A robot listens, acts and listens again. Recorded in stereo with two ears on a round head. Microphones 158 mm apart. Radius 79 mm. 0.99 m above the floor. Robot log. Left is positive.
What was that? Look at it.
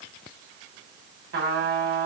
note: The trumpet: about 65° right or 115° right.
cmd yaw -65
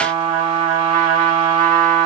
note: So it is at 50° right.
cmd yaw -50
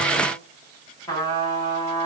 note: The trumpet is now 20° left.
cmd yaw +20
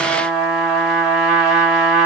end: Found it: a trumpet, straight ahead, 1 to 2 m away.